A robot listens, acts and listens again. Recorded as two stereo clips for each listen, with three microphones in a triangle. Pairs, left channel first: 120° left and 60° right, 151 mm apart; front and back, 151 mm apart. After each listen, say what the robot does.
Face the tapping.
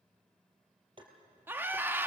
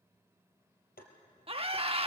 Facing the tapping.